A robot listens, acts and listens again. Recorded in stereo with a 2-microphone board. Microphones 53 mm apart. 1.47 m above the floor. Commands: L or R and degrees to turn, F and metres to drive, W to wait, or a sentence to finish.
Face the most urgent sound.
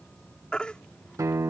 L15
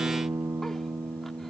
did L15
W
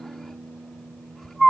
Facing the baby crying.